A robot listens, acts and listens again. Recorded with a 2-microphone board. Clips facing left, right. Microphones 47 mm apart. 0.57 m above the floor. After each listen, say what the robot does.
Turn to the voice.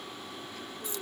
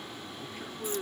Turn 20° right.
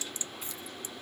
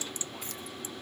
Keep listening.
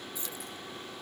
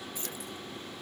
Keep listening.
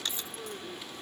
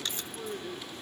Found it: a man speaking, straight ahead.